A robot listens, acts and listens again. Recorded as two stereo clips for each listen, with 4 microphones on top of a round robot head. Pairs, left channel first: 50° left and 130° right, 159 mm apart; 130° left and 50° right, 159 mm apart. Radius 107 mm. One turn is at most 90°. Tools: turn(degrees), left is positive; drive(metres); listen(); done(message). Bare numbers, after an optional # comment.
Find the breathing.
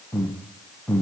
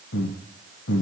# The breathing: 130° left.
turn(90)
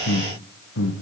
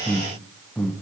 # The breathing is now 50° left.
turn(50)
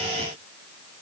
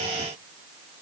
listen()
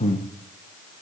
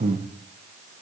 done("Facing the breathing.")